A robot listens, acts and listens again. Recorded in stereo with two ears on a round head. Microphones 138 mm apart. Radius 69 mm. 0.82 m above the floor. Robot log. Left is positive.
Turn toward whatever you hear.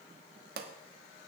note: The pop: about 65° right or 115° right.
cmd yaw -65
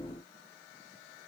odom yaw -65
cmd idle
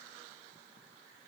end: I heard a pop, but can't make it out now. It was about straight ahead or 50° right.